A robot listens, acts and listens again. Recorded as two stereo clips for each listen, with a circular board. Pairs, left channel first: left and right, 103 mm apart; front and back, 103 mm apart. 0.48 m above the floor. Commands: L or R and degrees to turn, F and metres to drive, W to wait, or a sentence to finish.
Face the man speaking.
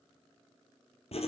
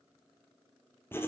W
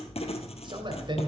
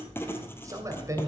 R125
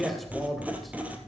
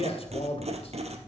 Found it: a man speaking, straight ahead.